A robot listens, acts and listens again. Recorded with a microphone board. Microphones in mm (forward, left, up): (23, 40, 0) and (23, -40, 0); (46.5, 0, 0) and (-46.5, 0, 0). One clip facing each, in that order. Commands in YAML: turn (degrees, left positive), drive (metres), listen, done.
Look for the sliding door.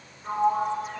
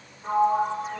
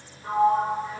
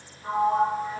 turn: -105
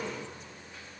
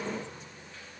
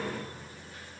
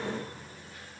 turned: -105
listen: true
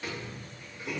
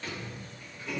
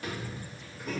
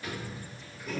turn: 10
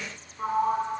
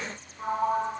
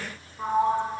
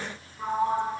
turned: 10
done: "Facing the sliding door."